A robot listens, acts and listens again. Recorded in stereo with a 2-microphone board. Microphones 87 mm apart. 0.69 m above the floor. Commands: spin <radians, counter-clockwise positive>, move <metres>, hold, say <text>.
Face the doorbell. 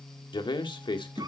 hold
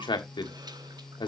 hold
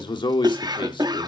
say I can't make out a doorbell, only a man speaking and a cough.